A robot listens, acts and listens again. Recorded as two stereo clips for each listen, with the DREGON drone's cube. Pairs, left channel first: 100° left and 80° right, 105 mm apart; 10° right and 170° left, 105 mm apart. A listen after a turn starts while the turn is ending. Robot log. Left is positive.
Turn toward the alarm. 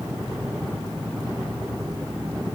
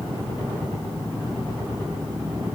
cmd idle
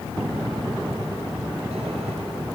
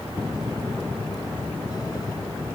cmd idle
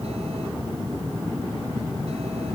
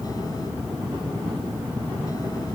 end: I can't make out an alarm to turn to.